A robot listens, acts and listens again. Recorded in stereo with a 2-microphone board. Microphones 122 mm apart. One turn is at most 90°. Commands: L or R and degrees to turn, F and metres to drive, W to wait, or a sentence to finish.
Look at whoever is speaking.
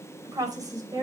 R30
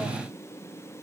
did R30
W
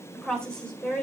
L10
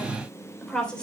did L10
L10
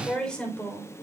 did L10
L10
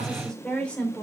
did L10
L10
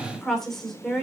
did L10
Facing the woman speaking, 2 to 4 m away.